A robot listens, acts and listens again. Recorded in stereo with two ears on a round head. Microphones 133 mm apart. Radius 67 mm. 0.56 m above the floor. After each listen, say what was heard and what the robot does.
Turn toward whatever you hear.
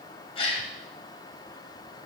The gasp: about 40° left or 140° left. Turn 40° left.
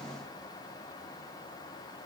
Keep listening.
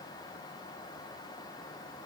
I heard a gasp, but can't make it out now. It was about straight ahead or 100° left.